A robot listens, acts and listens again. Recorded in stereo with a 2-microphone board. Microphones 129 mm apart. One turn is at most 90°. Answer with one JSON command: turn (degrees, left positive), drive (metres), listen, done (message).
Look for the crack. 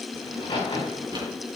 {"turn": 40}
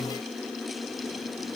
{"listen": true}
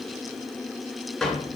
{"done": "I heard a crack, but can't make it out now. It was about straight ahead or 100° left."}